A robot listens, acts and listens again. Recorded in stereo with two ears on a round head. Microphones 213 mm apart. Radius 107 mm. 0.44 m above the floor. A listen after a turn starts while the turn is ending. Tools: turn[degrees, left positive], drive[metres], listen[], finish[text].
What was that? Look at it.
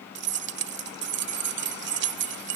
Thought: The keys jangling: about 50° right or 130° right.
Action: turn[-50]
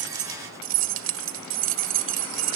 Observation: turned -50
Thought: So it is at 70° right.
Action: turn[-70]
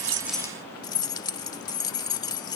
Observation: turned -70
Thought: The keys jangling is now 20° left.
Action: turn[20]
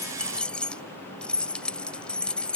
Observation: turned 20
Action: finish[Found it: keys jangling, straight ahead.]